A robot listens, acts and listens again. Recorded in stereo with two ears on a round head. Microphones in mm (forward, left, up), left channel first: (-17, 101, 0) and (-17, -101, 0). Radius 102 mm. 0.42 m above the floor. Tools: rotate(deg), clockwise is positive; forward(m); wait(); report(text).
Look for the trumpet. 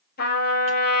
rotate(-45)
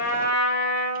rotate(-90)
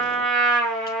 report("Facing the trumpet.")